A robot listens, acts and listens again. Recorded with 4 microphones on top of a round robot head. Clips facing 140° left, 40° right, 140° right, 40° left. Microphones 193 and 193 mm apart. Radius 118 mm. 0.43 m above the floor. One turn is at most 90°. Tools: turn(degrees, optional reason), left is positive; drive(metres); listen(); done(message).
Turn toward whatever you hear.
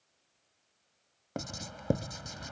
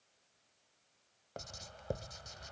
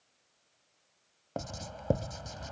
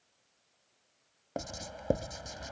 turn(degrees=90, reason="The writing: 120° left.")
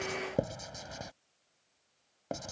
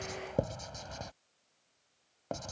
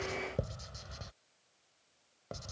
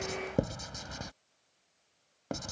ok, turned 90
turn(degrees=60, reason="The writing is now 60° left.")
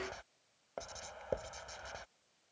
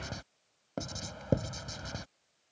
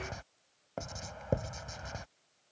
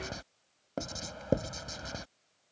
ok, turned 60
done("Found it: writing, straight ahead.")